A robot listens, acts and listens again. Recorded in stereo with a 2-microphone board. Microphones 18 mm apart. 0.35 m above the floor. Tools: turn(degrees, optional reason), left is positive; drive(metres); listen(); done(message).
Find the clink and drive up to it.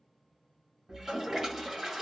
listen()
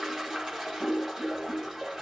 listen()
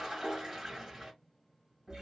done("I can't make out a clink, only a toilet flushing.")